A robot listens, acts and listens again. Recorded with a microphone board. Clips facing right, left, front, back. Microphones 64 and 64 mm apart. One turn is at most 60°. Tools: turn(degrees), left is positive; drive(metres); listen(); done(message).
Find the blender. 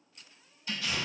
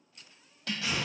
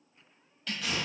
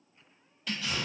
listen()
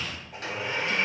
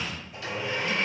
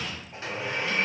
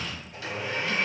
turn(degrees=-55)
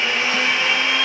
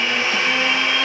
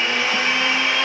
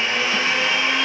done("Facing the blender, 1 to 2 m away.")